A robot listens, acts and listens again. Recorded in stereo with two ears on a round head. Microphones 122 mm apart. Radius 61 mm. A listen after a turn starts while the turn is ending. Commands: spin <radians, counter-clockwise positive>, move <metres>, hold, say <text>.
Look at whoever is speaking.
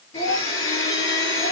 spin 1.05
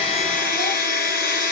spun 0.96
hold
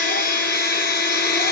hold
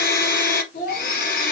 spin 1.05
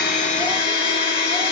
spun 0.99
hold
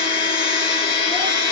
hold
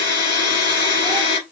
say Facing where the child speaking came from. I can't hear it now.